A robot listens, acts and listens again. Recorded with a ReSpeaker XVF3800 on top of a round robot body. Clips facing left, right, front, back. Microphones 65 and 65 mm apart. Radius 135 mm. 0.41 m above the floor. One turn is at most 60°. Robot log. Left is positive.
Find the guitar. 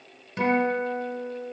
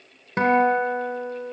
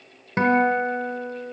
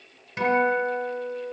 note: The guitar: 45° right.
cmd yaw -45
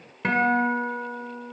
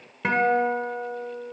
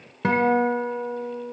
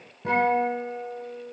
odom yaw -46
end: Found it: a guitar, straight ahead, 1 to 2 m away.